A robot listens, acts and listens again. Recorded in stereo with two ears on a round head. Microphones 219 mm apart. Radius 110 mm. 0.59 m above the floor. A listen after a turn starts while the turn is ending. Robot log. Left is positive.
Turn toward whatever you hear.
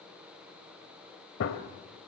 note: The gunshot: about 55° left or 125° left.
cmd yaw +55
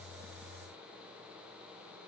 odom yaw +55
cmd idle
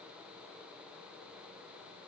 end: I heard a gunshot, but can't make it out now. It was about straight ahead or 70° left.